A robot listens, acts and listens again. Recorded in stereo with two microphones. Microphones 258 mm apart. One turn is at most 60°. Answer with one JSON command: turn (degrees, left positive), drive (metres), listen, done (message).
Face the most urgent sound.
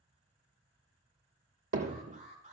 {"turn": -25}
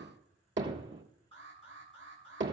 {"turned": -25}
{"turn": -60}
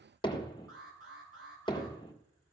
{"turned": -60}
{"turn": -60}
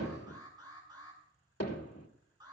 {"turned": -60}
{"turn": -15}
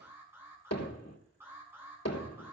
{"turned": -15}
{"turn": -10}
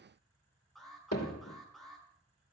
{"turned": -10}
{"done": "Found it: an alarm, straight ahead."}